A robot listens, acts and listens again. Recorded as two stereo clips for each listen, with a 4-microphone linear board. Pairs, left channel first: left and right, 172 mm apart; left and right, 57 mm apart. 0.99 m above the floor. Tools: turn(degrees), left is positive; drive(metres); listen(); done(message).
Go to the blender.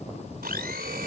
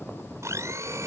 turn(degrees=-65)
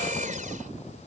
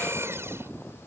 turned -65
turn(degrees=-50)
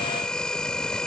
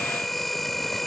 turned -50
drive(metres=1.0)
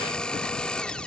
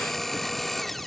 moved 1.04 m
drive(metres=1.0)
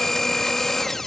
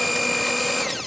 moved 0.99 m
drive(metres=1.0)
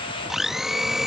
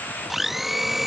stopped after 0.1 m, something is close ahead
done("Arrived at the blender, straight ahead.")